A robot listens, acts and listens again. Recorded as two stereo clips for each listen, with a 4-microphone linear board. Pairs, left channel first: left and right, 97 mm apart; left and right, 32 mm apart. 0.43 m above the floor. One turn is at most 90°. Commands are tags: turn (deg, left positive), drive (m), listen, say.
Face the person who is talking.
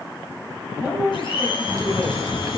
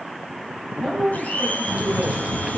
<turn deg="-15"/>
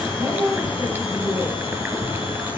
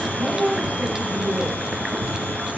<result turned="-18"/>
<turn deg="-90"/>
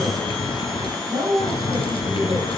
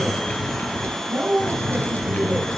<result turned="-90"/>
<turn deg="-55"/>
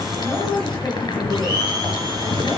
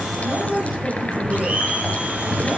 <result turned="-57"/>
<say>Facing the man speaking, over 4 m away.</say>